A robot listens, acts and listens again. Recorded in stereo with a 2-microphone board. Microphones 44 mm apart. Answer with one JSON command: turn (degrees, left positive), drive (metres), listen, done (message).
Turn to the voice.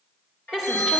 {"turn": 15}
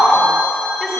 {"turn": 30}
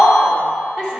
{"turn": -20}
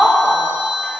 {"done": "Found it: a woman speaking, straight ahead."}